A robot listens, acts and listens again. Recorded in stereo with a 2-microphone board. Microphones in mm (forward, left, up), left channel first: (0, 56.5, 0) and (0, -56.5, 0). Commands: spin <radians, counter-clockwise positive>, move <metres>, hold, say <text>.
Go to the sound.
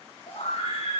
spin 1.22
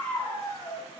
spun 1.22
spin 0.52
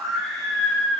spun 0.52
move 1.0
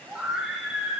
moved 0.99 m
spin -0.17
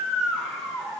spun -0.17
move 1.0
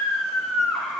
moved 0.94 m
move 1.0
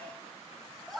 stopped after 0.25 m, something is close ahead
say I am next to the scream.